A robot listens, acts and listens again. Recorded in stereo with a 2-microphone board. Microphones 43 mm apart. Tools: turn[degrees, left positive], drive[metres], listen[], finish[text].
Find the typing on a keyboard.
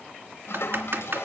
Thought: The typing on a keyboard: about 65° right or 115° right.
Action: turn[-65]
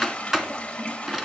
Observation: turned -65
Thought: So it is at 10° right.
Action: turn[-10]
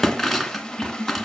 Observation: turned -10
Action: finish[Facing the typing on a keyboard, 2 to 4 m away.]